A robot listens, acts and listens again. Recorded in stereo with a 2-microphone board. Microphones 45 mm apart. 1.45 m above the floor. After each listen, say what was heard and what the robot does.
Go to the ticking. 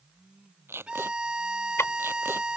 The ticking: about 75° left or 105° left. Turn 75° left.
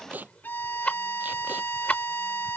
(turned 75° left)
So it is at 30° left. Turn 30° left.
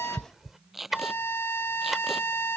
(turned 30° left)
Drive 1.0 m forward.
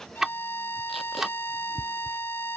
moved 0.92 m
The ticking is now 10° right. Turn 10° right.
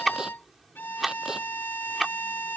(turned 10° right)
Drive 1.0 m forward.
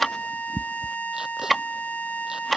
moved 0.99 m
Drive 1.0 m forward.
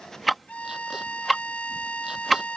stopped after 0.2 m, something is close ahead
Arrived at the ticking, straight ahead.